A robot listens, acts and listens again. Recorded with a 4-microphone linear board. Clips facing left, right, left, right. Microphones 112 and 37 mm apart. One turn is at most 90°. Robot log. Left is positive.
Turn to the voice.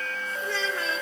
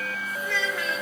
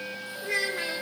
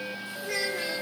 note: The child speaking: about 35° left or 145° left.
cmd yaw +35
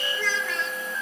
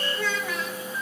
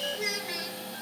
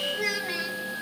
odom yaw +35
end: Facing the child speaking.